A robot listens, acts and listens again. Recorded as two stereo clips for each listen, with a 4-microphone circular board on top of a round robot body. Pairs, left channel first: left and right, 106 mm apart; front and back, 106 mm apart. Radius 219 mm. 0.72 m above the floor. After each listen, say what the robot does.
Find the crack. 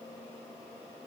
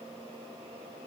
Keep listening.
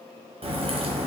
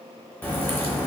Turn 70° right.
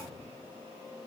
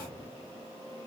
Facing where the crack came from. I can't hear it now.